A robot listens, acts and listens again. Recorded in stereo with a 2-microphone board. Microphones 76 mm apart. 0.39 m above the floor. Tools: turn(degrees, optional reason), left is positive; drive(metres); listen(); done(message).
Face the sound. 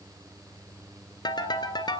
turn(degrees=75, reason="The ringtone: about 75° left or 105° left.")
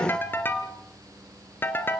turn(degrees=30, reason="So it is at 30° left.")
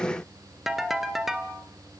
done("Facing the ringtone, 2 to 4 m away.")